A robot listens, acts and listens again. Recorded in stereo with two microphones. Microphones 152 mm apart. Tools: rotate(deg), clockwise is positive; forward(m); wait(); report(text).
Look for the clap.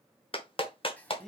rotate(-35)
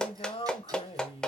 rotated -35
report("Found it: a clap, straight ahead.")